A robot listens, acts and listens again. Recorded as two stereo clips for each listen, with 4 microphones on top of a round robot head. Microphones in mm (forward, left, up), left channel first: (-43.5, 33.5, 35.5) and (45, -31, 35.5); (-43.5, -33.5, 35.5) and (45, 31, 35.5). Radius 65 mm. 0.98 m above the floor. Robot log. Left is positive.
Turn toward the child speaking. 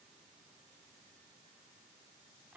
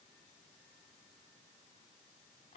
cmd idle
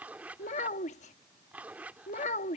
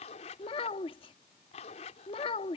note: The child speaking: 170° left.
cmd yaw +170
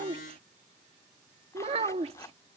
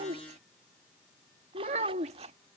end: Facing the child speaking.